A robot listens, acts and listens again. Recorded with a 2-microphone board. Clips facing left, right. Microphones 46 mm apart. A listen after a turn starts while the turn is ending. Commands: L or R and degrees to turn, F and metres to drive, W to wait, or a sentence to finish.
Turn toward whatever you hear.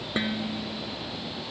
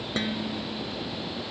L30
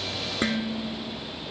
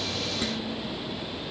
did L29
L140
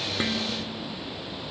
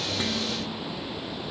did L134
W
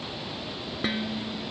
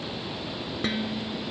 Found it: dishes clattering, straight ahead.